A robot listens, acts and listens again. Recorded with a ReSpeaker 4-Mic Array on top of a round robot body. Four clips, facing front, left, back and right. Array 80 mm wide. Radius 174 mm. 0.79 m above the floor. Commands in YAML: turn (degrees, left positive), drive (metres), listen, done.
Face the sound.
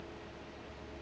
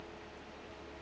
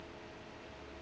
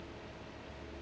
listen: true
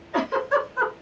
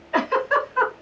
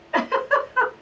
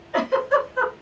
turn: 145
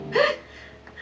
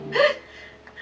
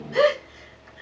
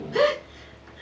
turn: 50
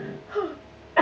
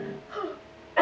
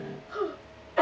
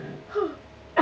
done: "Found it: a giggle, straight ahead."